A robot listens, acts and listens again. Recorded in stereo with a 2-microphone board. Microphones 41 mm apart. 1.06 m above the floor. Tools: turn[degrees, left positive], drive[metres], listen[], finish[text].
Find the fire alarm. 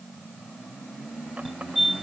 Action: turn[-30]
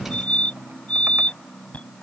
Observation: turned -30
Thought: So it is at 30° left.
Action: turn[30]
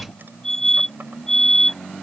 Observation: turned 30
Thought: The fire alarm is now 10° left.
Action: turn[10]
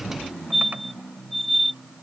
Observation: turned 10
Action: finish[Found it: a fire alarm, straight ahead.]